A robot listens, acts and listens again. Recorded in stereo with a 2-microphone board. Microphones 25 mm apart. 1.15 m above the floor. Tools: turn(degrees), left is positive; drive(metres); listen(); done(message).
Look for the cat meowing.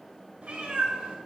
turn(degrees=-70)
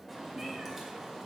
turn(degrees=-25)
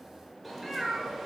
turn(degrees=-15)
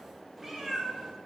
turn(degrees=-20)
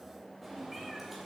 turn(degrees=-10)
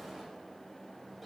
done("Facing the cat meowing.")